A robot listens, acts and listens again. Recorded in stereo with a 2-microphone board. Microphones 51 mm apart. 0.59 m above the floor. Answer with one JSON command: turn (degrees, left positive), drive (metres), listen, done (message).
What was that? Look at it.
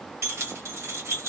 {"turn": -60}
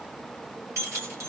{"turn": -60}
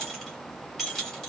{"done": "Facing the keys jangling."}